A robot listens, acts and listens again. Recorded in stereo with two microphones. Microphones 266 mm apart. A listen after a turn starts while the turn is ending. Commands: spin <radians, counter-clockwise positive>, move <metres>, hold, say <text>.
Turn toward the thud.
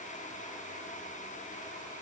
hold
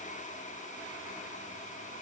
hold
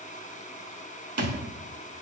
spin -1.13
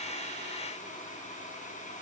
hold
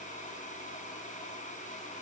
say I heard a thud, but can't make it out now. It was about straight ahead or 50° right.